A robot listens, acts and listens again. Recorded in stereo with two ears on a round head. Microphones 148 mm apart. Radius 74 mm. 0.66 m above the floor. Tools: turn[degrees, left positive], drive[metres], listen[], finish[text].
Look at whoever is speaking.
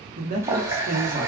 Thought: The man speaking: about 50° right or 130° right.
Action: turn[-50]
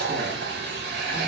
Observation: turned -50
Action: listen[]
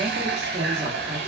Thought: So it is at 20° right.
Action: turn[-20]
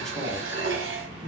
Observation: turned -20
Action: finish[Facing the man speaking, 1 to 2 m away.]